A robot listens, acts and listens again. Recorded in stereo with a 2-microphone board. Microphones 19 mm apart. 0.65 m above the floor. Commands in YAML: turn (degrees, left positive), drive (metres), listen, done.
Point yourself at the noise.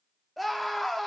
turn: 30
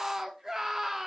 turn: -30
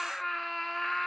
done: "Facing the scream, under 1 m away."